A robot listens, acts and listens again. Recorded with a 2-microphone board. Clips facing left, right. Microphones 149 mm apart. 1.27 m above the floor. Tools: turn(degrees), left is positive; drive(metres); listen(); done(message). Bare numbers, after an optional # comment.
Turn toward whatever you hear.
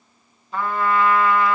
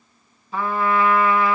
turn(-30)
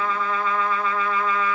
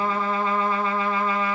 # So it is at 145° right.
turn(-145)
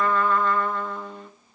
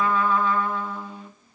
# The trumpet is now 10° right.
turn(-10)
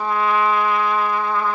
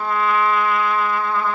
done("Facing the trumpet.")